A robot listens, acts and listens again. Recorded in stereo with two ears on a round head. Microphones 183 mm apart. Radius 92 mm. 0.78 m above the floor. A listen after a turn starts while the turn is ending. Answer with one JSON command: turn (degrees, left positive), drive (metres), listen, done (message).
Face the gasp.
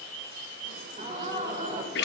{"turn": -40}
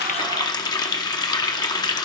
{"listen": true}
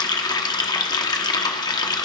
{"done": "I heard a gasp, but can't make it out now. It was about straight ahead or 100° right."}